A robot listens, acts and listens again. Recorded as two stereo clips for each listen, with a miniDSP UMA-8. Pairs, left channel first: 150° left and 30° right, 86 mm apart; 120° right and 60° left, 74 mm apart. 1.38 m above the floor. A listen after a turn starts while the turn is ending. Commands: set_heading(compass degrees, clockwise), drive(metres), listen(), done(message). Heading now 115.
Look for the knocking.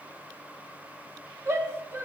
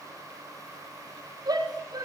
listen()
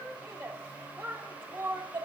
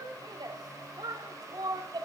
listen()
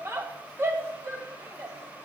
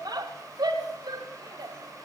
done("I can't make out knocking to turn to.")